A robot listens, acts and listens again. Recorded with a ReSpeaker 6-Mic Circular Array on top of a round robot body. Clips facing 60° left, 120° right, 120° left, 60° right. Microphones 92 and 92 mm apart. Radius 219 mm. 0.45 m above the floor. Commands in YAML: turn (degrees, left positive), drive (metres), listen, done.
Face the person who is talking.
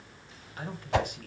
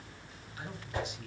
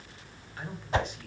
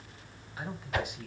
turn: 20
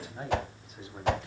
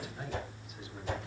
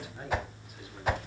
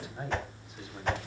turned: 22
done: "Facing the man speaking."